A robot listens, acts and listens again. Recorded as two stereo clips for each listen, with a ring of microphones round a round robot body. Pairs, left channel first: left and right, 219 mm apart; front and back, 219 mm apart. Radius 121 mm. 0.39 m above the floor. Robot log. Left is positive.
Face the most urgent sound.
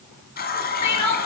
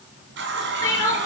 note: The crying: 80° left.
cmd yaw +80
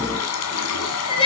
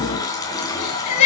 note: The crying is now 20° left.
cmd yaw +20
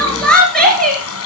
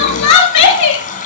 end: Found it: crying, straight ahead.